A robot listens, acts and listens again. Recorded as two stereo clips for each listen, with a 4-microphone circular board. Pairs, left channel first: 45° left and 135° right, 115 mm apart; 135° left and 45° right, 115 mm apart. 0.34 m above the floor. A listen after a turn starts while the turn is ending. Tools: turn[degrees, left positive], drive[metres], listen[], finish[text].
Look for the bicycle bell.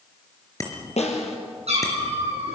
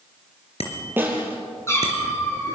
Thought: The bicycle bell: 105° left.
Action: turn[105]
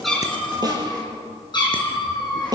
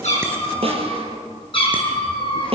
Action: listen[]
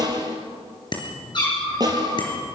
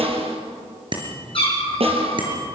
Action: finish[Facing the bicycle bell, over 4 m away.]